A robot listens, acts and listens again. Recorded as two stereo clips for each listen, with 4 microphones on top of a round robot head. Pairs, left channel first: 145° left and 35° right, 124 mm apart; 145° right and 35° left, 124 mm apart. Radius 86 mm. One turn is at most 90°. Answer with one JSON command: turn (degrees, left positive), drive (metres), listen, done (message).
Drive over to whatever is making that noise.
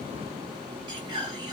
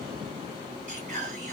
{"turn": 15}
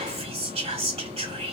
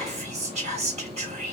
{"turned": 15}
{"drive": 1.0}
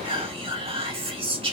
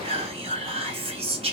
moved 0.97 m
{"drive": 1.0}
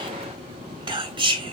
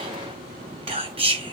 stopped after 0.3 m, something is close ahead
{"done": "I am next to the whispering."}